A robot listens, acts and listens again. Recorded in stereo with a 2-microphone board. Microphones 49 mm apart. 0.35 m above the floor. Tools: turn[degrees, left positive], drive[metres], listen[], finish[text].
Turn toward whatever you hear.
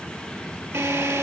Thought: The drill: about 70° right or 110° right.
Action: turn[-70]
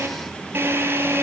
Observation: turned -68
Thought: So it is at 40° right.
Action: turn[-40]
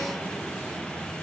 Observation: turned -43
Action: listen[]
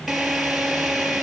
Action: finish[Facing the drill.]